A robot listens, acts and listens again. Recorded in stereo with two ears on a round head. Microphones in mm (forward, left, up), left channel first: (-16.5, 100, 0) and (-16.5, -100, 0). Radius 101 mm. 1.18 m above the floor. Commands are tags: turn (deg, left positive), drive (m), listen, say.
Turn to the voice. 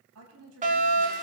<turn deg="-75"/>
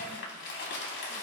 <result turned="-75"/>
<listen/>
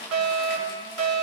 <listen/>
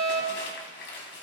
<say>I heard a woman speaking, but can't make it out now. It was about straight ahead or 30° right.</say>